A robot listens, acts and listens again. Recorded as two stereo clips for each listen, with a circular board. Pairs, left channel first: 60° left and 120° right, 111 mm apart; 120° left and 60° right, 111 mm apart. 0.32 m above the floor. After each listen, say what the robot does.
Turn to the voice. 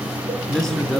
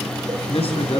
Turn 145° left.
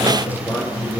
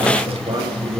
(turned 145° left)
Turn 10° right.
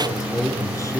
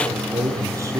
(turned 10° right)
Facing the man speaking.